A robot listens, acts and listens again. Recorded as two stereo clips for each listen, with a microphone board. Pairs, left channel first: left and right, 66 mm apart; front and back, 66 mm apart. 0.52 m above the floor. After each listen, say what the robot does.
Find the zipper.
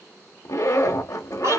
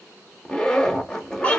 Turn 80° left.
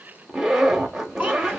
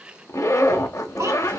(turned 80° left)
Turn 10° right.
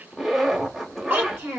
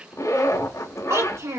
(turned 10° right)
Facing the zipper, under 1 m away.